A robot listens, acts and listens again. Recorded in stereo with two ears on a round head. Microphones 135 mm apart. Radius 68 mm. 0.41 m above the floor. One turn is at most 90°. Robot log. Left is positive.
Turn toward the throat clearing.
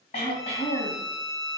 note: The throat clearing: about 50° left or 130° left.
cmd yaw +50
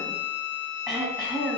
end: Facing the throat clearing.